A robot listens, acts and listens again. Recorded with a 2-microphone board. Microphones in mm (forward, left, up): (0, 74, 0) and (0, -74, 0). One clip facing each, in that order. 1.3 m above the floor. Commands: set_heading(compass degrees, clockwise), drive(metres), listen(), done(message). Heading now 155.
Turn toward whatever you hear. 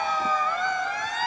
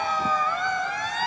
listen()
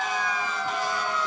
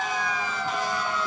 listen()
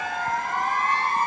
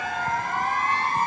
done("I can't make out anything.")